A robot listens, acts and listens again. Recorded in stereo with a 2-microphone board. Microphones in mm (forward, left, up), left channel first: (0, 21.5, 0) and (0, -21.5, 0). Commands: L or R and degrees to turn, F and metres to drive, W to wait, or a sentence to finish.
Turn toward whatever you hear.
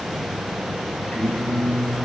L30
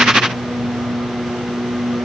L120
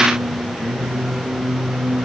Facing the singing, over 4 m away.